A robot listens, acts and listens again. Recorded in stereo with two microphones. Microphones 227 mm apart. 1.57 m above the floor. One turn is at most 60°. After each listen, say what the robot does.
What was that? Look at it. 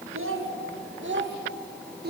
Turn 45° right.
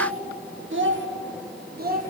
Turn 40° right.
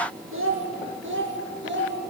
Turn 55° right.
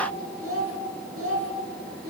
Turn 60° right.
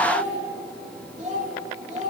Turn 30° right.
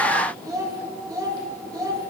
Turn 15° right.
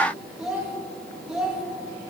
Found it: a child speaking, straight ahead.